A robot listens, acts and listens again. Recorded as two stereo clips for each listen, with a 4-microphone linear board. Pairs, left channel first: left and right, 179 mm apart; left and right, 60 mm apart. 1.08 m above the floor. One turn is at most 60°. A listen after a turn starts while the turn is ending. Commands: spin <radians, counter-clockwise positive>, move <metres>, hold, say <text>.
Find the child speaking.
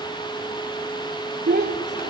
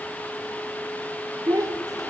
spin -1.05
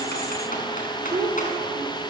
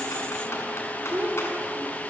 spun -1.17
spin -0.52
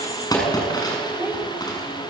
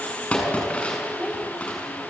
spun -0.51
hold
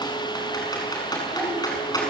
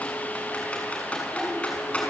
spin -0.17
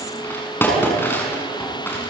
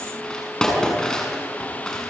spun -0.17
hold
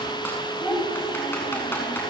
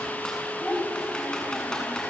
say Found it: a child speaking, straight ahead, over 4 m away.